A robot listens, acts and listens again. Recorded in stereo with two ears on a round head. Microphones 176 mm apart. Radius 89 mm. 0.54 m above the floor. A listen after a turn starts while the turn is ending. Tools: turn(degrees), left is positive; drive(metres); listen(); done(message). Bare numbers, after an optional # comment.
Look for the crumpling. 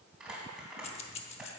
turn(-30)
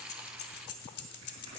listen()
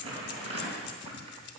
# So it is at 145° right.
turn(-145)
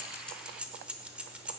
listen()
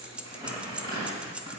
# The crumpling is now 20° right.
turn(-20)
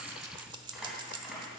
done("Facing the crumpling, 2 to 4 m away.")